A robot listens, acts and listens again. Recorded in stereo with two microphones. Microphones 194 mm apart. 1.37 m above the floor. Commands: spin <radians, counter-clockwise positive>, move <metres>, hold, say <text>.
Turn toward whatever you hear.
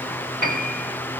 spin -0.96
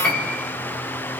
say Found it: a piano, straight ahead, over 4 m away.